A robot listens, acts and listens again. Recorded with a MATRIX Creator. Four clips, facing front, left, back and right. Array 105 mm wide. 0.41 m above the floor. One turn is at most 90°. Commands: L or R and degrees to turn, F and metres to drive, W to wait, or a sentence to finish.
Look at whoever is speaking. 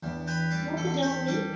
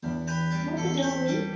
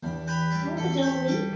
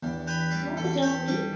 R90
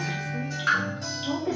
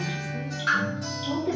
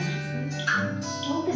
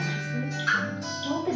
R65
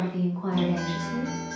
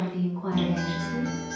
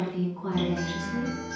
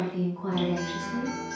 L10
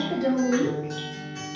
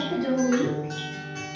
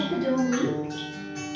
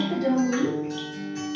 Found it: a woman speaking, straight ahead, 1 to 2 m away.